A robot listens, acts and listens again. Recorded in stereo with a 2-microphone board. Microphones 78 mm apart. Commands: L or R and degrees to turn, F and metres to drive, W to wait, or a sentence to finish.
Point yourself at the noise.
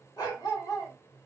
L45
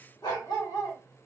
L80
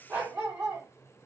R20
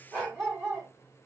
Found it: a dog barking, straight ahead, 1 to 2 m away.